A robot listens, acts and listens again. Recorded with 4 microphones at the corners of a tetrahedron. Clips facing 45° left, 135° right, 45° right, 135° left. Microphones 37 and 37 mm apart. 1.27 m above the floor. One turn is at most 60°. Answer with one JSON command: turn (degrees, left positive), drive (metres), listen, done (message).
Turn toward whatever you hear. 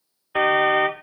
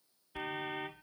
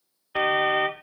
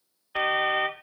{"turn": 40}
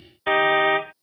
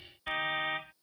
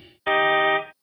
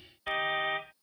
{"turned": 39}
{"done": "Found it: a car horn, straight ahead."}